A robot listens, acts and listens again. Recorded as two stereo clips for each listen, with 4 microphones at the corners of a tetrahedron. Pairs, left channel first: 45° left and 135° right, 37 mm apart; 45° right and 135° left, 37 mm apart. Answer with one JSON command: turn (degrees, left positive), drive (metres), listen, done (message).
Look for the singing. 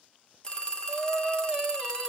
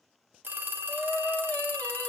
{"turn": -80}
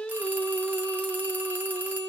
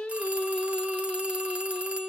{"done": "Found it: singing, straight ahead."}